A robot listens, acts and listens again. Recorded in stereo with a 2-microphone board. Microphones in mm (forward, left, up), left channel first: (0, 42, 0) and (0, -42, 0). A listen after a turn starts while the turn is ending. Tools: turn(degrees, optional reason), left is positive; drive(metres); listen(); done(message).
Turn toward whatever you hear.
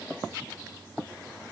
listen()
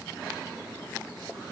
listen()
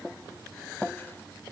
done("I can't make out anything.")